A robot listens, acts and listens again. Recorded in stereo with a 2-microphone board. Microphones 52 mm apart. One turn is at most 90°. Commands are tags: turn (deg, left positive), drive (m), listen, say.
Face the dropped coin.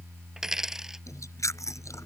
<turn deg="-30"/>
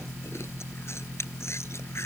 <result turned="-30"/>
<listen/>
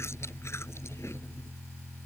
<say>I heard a dropped coin, but can't make it out now. It was about 20° left or 140° right.</say>